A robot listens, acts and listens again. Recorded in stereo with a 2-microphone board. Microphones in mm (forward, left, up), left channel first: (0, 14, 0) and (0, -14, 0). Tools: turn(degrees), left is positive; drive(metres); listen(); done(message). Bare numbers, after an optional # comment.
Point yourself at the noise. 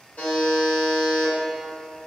turn(90)
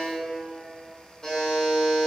# So it is at 15° left.
turn(15)
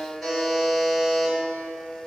done("Found it: a buzzer, straight ahead.")